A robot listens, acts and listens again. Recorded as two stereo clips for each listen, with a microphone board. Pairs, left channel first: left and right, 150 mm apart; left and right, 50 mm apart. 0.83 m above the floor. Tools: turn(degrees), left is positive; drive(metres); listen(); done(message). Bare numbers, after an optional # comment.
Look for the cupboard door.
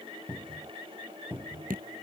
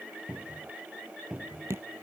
# The cupboard door: about 15° right or 165° right.
turn(-15)
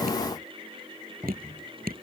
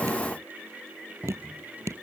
# So it is at 150° right.
turn(-150)
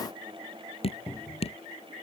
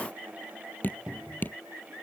# The cupboard door is now 10° right.
turn(-10)
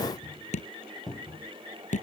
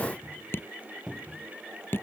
done("Found it: a cupboard door, straight ahead.")